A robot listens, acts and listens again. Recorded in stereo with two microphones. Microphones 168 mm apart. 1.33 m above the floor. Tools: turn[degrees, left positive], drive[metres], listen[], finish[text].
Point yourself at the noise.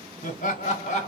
Thought: The laughter: about 45° left or 135° left.
Action: turn[45]
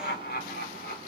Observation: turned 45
Thought: So it is at 110° left.
Action: turn[110]
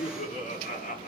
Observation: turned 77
Thought: The laughter is now 55° left.
Action: turn[55]
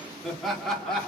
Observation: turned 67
Action: finish[Facing the laughter.]